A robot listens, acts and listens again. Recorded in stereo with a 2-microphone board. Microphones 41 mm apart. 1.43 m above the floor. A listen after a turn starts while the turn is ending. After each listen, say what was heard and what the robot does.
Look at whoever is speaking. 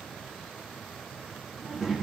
Turn 30° right.
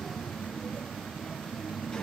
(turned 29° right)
So it is at 20° left. Turn 20° left.
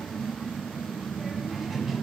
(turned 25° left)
Facing the child speaking, 1 to 2 m away.